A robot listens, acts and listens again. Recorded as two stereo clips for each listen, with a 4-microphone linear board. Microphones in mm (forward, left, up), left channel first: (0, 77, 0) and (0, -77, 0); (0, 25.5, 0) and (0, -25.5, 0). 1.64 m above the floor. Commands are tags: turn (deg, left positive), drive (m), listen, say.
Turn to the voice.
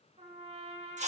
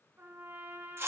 <listen/>
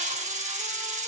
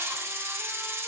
<listen/>
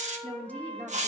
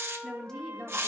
<turn deg="30"/>
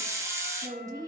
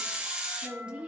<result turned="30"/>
<turn deg="-20"/>
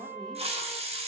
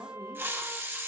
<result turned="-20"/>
<listen/>
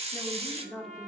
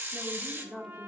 <say>Facing the woman speaking, 1 to 2 m away.</say>